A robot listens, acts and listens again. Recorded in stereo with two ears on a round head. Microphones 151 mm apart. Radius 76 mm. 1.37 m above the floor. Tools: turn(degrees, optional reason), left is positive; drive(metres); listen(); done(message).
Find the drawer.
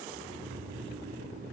listen()
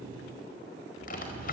turn(degrees=60, reason="The drawer: about 60° left or 120° left.")
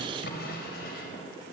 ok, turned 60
turn(degrees=60, reason="So it is at 60° left.")
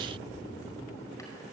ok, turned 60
listen()
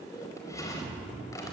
turn(degrees=20, reason="The drawer is now 20° left.")
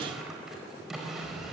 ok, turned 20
done("Found it: a drawer, straight ahead, over 4 m away.")